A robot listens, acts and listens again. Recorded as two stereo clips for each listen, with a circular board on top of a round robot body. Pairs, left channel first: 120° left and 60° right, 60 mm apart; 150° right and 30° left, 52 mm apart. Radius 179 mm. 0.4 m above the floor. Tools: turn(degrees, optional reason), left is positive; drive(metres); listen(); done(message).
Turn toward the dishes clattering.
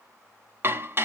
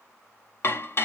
turn(degrees=-110, reason="The dishes clattering: 110° right.")
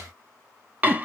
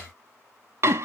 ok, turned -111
done("Found it: dishes clattering, straight ahead.")